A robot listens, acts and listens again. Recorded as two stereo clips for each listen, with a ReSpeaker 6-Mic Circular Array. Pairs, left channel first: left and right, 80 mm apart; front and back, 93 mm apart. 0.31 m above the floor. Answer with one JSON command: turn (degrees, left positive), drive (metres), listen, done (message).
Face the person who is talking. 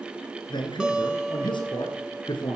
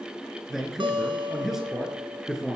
{"turn": 95}
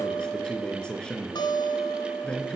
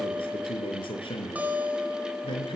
{"turn": 10}
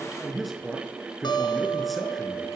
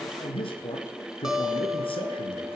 {"done": "Found it: a man speaking, straight ahead."}